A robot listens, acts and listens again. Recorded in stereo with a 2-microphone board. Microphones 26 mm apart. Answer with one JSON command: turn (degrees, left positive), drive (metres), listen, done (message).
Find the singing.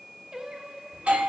{"turn": -30}
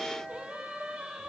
{"turn": -120}
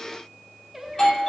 {"turn": -10}
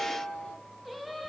{"done": "Found it: singing, straight ahead, 1 to 2 m away."}